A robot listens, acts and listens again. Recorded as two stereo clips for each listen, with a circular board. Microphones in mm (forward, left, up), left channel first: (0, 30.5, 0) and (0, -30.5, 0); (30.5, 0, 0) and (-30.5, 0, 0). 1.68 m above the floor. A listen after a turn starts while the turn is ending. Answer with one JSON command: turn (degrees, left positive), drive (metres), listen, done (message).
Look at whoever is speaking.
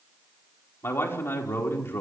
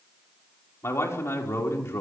{"turn": 45}
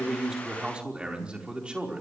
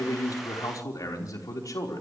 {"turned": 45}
{"turn": -15}
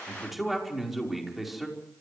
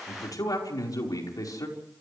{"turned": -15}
{"done": "Found it: a man speaking, straight ahead, over 4 m away."}